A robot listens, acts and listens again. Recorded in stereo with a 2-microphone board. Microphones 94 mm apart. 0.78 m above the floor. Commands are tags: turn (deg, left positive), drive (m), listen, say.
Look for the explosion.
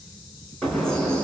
<turn deg="30"/>
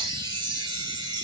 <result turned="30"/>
<listen/>
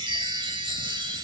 <say>I heard an explosion, but can't make it out now. It was about 25° right or 145° left.</say>